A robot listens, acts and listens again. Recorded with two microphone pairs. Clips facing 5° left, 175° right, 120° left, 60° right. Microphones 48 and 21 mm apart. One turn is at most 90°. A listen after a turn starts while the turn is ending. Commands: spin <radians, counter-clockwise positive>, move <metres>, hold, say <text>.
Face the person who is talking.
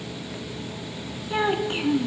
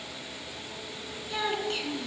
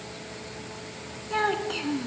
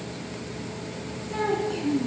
spin 1.13
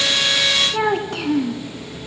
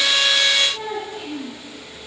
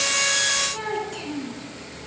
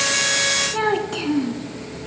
say Found it: a child speaking, straight ahead, 2 to 4 m away.